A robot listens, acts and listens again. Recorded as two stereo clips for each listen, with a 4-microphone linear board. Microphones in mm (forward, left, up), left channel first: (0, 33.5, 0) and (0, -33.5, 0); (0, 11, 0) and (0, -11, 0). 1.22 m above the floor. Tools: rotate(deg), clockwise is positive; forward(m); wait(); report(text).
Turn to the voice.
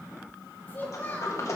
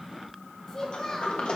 rotate(-25)
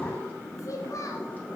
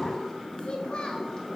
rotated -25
rotate(-130)
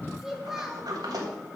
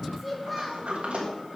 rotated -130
report("Found it: a child speaking, straight ahead, 1 to 2 m away.")